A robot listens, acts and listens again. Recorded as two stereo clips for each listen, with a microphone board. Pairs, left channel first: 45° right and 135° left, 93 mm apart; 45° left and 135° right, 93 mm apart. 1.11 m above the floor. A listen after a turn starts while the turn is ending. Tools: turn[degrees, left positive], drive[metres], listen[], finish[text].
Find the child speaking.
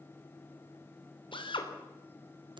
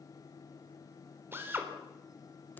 Action: listen[]
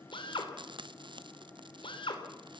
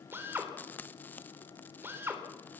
Action: listen[]
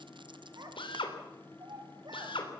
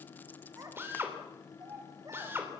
Thought: The child speaking: 175° left.
Action: turn[175]
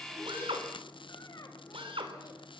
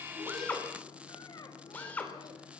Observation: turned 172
Action: listen[]
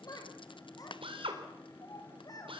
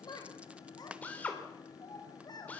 Action: finish[Found it: a child speaking, straight ahead, over 4 m away.]